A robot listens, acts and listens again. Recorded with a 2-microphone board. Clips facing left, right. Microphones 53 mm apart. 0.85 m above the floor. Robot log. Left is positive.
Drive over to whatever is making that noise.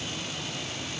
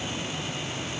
cmd idle
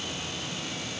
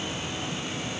cmd idle
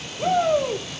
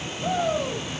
note: The shout: about 50° left or 130° left.
cmd yaw +50
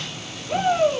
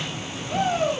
note: So it is at 10° left.
cmd yaw +10
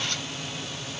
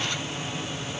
cmd idle
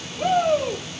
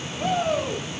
cmd fwd 1.0
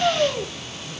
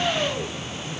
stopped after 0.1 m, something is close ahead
note: The shout is now 10° left.
cmd yaw +10
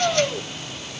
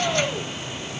end: Blocked. The shout is further on, straight ahead.